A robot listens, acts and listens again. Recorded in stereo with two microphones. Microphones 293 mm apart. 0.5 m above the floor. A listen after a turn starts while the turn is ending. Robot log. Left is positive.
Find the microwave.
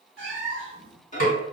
note: The microwave: about 25° left or 155° left.
cmd yaw +25
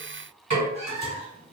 cmd idle
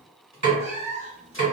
cmd idle
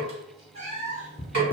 note: So it is at 125° left.
cmd yaw +125
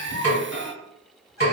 end: Found it: a microwave, straight ahead.